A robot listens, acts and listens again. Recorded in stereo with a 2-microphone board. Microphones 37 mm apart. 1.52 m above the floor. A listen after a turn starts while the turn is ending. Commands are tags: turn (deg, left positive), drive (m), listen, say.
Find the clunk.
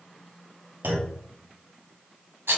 <turn deg="-60"/>
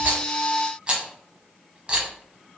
<listen/>
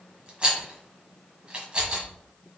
<say>I heard a clunk, but can't make it out now. It was about straight ahead or 60° right.</say>